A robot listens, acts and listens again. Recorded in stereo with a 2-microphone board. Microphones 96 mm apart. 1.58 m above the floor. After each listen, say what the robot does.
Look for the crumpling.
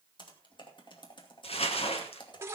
Turn 90° left.
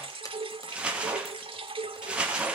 Turn 10° right.
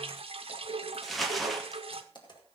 Found it: crumpling, straight ahead.